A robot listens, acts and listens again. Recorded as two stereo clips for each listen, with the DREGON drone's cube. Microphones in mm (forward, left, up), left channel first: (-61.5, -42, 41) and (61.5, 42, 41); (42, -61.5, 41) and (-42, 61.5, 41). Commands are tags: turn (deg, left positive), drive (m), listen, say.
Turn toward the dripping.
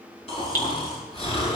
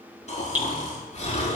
<turn deg="-155"/>
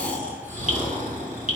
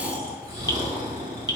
<listen/>
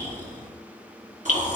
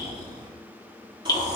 <say>Found it: dripping, straight ahead.</say>